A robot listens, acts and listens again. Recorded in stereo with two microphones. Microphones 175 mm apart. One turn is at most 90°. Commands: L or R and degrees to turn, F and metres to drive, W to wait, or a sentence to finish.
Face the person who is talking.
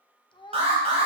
L25
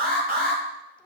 Found it: a child speaking, straight ahead.